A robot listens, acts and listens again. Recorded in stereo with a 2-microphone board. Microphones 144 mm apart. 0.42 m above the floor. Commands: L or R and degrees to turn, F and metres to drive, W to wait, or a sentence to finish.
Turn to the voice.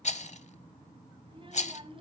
R40
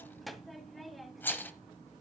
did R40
Found it: a child speaking, straight ahead, 1 to 2 m away.